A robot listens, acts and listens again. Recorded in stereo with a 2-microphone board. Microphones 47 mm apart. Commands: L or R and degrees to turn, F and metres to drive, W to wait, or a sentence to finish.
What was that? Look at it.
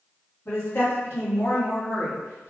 L70
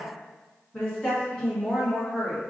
Facing the woman speaking.